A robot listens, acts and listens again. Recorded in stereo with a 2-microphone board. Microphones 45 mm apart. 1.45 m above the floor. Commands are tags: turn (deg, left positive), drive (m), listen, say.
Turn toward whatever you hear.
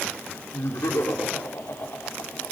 <turn deg="75"/>
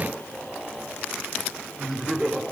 <turn deg="-10"/>
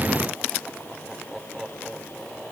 <turn deg="-10"/>
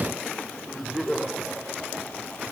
<say>Facing the laughter, over 4 m away.</say>